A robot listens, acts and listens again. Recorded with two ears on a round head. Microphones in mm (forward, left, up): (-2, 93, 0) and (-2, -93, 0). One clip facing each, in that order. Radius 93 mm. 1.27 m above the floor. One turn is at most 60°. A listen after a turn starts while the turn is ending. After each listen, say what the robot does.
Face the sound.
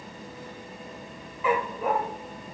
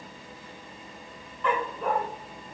Turn 30° left.
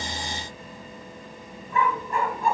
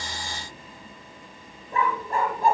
Turn 35° right.
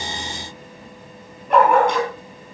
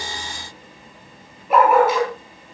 Facing the dog barking.